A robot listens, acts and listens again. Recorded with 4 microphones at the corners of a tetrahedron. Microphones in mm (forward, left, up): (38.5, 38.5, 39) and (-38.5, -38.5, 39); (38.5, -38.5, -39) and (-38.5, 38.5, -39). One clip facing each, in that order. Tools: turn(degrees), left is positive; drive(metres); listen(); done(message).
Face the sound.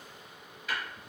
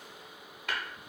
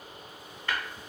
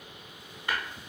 turn(degrees=-150)
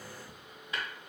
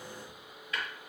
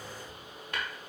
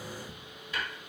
turn(degrees=-15)
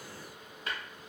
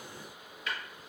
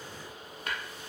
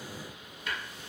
done("Facing the tapping.")